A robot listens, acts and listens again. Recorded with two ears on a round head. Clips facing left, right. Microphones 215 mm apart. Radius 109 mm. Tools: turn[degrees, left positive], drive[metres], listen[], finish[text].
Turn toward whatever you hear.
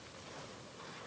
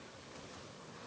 Action: listen[]
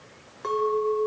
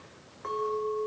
Thought: The clink: about 50° left or 130° left.
Action: turn[50]
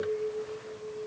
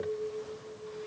Action: finish[Facing the clink.]